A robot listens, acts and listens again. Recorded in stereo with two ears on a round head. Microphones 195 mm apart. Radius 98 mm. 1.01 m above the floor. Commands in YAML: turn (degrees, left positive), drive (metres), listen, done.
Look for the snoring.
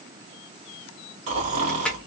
turn: -35
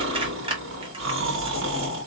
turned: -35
turn: -110
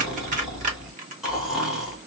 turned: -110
done: "Facing the snoring."